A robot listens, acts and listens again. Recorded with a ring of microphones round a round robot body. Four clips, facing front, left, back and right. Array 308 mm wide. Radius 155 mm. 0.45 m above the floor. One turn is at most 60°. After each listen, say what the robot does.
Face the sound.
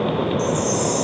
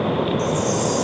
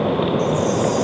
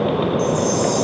Turn 10° right.
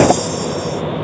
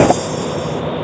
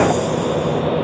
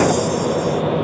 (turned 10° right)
Found it: a chime, straight ahead.